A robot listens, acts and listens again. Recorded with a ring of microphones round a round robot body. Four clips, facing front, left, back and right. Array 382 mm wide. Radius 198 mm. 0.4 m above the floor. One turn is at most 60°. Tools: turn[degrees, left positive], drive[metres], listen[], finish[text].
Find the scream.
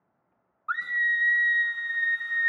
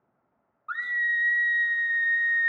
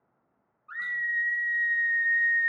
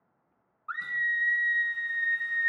Action: finish[Facing the scream, 1 to 2 m away.]